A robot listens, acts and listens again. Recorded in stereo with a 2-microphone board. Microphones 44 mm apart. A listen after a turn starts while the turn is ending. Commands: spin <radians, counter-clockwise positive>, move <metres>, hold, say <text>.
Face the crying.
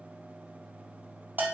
hold
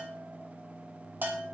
hold
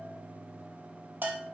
say I can't make out crying to turn to.